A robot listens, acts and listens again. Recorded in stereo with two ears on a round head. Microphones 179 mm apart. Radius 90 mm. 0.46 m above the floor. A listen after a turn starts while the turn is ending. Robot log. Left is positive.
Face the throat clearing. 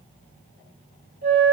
cmd idle
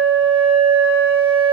cmd idle
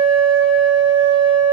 end: I can't make out throat clearing, only a flute.